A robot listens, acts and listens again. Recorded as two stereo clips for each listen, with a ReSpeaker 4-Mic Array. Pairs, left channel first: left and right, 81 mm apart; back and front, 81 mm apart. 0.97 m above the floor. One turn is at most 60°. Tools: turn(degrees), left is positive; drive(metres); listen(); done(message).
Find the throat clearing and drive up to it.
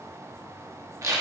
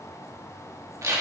listen()
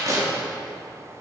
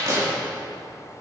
listen()
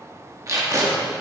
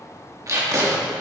done("I can't make out throat clearing to turn to.")